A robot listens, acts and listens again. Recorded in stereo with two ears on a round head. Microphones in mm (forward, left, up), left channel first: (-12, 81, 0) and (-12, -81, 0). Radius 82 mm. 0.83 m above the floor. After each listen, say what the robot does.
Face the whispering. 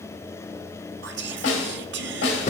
Turn 70° right.
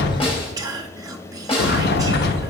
Turn 20° right.
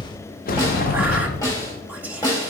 Keep listening.
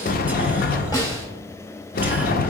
Keep listening.
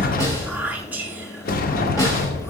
Turn 10° right.
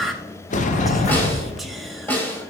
Found it: whispering, straight ahead, 1 to 2 m away.